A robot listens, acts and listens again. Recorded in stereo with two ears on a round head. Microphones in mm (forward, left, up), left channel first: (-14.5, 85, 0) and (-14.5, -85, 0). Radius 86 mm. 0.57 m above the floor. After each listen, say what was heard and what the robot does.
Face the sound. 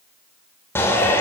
Turn 30° left.
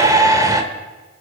So it is at 20° right. Turn 20° right.
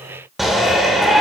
Found it: a shout, straight ahead.